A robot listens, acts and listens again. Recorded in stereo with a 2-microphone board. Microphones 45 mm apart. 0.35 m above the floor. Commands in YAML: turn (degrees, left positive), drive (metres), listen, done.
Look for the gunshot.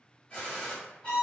turn: 30
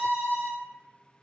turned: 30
listen: true
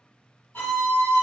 done: "I heard a gunshot, but can't make it out now. It was about straight ahead or 120° left."